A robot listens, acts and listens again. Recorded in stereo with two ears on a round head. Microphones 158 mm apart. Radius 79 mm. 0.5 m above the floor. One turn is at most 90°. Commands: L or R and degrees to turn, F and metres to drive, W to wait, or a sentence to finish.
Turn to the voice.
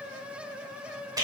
W
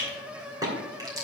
W
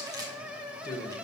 L25
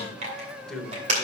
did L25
Facing the man speaking, 1 to 2 m away.